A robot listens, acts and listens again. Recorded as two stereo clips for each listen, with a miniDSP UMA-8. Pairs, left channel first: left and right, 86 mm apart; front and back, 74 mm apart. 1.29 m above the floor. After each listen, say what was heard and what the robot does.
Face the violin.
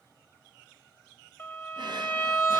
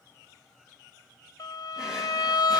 The violin: 35° left. Turn 35° left.
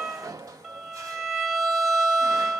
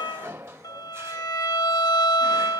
Facing the violin, 1 to 2 m away.